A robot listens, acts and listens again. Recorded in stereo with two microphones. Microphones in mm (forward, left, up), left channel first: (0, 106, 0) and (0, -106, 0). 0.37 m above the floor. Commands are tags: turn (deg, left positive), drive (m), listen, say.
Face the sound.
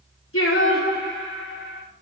<turn deg="90"/>
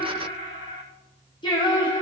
<turn deg="25"/>
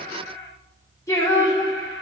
<turn deg="20"/>
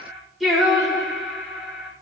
<say>Facing the singing.</say>